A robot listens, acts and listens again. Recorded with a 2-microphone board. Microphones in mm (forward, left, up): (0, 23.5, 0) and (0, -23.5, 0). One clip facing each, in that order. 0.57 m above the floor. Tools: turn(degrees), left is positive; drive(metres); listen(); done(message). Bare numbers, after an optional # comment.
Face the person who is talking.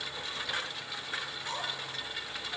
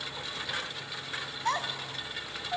turn(-90)
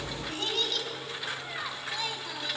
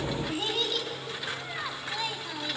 # So it is at 10° right.
turn(-10)
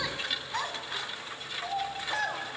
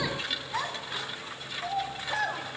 done("Facing the child speaking.")